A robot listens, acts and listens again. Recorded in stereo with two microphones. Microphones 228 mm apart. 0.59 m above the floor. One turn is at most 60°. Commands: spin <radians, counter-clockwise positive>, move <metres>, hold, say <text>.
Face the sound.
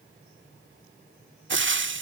spin -0.96
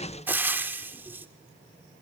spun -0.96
spin -0.17
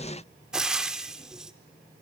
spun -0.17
say Found it: frying, straight ahead.